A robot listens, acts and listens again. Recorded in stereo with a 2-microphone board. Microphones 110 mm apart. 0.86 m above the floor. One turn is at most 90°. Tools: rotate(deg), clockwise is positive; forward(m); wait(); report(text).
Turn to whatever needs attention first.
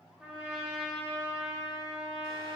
wait()
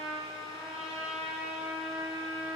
wait()
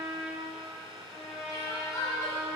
rotate(-30)
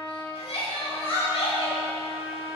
rotate(-90)
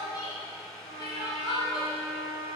rotate(-40)
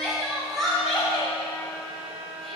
report("Facing the crying.")